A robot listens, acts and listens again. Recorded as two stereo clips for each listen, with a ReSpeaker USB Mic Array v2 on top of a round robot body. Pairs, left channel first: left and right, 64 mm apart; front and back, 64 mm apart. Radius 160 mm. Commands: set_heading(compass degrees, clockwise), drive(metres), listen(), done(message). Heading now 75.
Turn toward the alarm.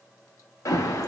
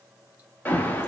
set_heading(15)
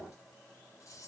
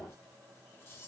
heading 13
listen()
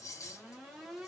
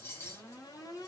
listen()
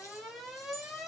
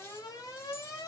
done("Facing the alarm, 1 to 2 m away.")